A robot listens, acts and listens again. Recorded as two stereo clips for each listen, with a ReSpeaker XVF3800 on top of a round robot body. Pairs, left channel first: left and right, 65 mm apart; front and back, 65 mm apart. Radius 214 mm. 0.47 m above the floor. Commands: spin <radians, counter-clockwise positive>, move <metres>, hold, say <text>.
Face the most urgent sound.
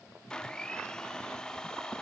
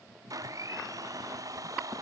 hold
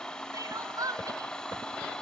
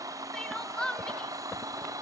spin -1.31
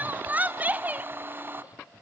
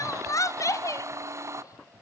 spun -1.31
spin -0.52
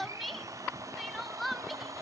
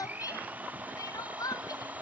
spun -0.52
say Found it: crying, straight ahead.